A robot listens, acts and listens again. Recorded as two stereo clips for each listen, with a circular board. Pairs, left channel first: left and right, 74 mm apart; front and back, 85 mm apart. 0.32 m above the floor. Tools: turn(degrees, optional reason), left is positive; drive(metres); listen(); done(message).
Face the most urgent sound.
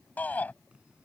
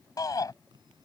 turn(degrees=25, reason="The shout: 25° left.")
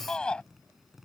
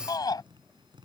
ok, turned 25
turn(degrees=15, reason="The shout is now 15° left.")
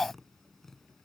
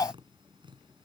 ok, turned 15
done("Facing the shout.")